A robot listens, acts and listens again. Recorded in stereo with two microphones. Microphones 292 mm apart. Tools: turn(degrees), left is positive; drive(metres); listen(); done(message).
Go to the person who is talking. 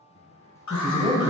turn(degrees=-20)
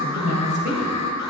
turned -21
turn(degrees=-140)
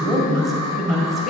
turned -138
drive(metres=1.0)
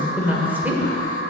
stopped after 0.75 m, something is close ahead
done("Arrived at the woman speaking, straight ahead.")